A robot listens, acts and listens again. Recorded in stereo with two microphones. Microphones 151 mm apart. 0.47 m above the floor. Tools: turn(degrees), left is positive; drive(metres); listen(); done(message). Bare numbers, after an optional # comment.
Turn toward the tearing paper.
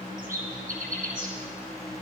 listen()
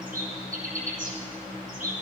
listen()
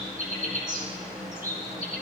done("I can't make out tearing paper, only a bird.")